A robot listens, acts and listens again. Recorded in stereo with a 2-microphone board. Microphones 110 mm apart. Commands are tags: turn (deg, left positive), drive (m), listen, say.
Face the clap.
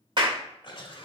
<turn deg="-45"/>
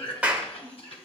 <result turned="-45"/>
<turn deg="-15"/>
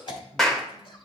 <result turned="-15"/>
<say>Facing the clap.</say>